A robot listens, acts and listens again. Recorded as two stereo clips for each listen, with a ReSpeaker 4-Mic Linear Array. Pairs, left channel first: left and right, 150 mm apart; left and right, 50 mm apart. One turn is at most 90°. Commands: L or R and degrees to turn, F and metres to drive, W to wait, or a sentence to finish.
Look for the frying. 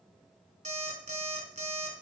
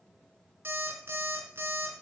W
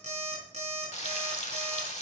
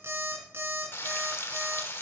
L50
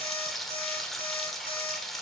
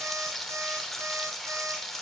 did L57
Found it: frying, straight ahead.